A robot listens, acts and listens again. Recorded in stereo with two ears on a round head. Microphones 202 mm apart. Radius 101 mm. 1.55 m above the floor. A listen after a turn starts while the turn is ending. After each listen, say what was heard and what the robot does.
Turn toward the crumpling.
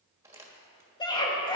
Turn 30° right.
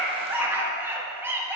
Keep listening.
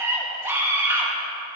Keep listening.
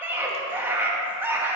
I heard crumpling, but can't make it out now. It was about 15° left or 135° right.